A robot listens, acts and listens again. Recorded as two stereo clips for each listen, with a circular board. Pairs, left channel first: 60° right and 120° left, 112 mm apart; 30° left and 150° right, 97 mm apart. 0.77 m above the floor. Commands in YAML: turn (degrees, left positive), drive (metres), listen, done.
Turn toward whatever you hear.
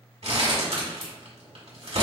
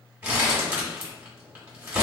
turn: 135
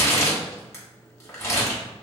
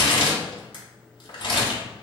done: "Found it: crumpling, straight ahead."